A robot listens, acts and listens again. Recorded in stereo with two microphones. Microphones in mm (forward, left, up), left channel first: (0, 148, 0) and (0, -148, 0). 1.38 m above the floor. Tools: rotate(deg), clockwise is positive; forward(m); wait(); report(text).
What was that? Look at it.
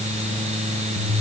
wait()
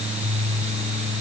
wait()
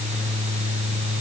report("I can't make out anything.")